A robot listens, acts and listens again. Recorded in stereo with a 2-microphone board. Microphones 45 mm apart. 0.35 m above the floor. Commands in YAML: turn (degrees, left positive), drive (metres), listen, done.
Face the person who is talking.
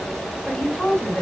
turn: 20
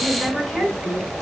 done: "Found it: a woman speaking, straight ahead."